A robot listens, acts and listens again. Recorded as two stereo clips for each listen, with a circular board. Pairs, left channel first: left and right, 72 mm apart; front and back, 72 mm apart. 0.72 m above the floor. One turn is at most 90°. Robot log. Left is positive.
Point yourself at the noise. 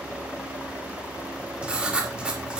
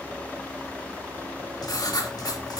note: The writing: 15° right.
cmd yaw -15
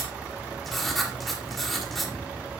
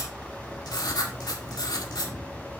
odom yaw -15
end: Found it: writing, straight ahead.